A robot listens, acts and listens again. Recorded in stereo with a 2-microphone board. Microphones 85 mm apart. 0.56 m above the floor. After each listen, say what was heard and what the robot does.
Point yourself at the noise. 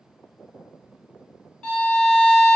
Turn 30° left.
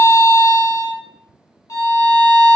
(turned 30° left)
So it is at 135° left. Turn 135° left.
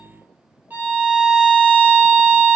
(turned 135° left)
The violin is now 25° right. Turn 25° right.
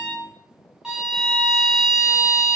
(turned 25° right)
The violin is now 10° right. Turn 10° right.
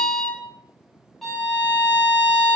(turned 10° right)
Found it: a violin, straight ahead.